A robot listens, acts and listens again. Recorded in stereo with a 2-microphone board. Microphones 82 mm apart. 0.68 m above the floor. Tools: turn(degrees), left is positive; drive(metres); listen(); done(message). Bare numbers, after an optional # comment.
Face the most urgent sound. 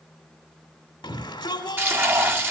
# The shout: about 65° left or 115° left.
turn(65)
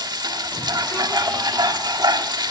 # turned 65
listen()
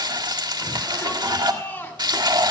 # So it is at 30° left.
turn(30)
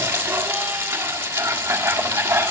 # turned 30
listen()
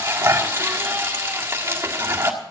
listen()
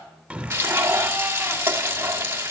# The shout is now 15° right.
turn(-15)
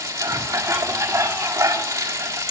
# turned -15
listen()
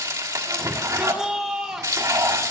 done("Found it: a shout, straight ahead.")